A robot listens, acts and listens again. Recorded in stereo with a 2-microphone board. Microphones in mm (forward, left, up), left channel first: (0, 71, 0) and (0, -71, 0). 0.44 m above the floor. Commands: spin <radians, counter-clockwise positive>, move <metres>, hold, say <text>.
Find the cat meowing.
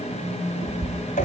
spin -0.61
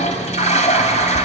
hold
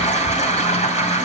hold
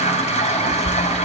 spin -1.92
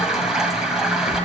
hold
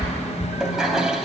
spin -0.79
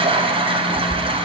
say Facing the cat meowing.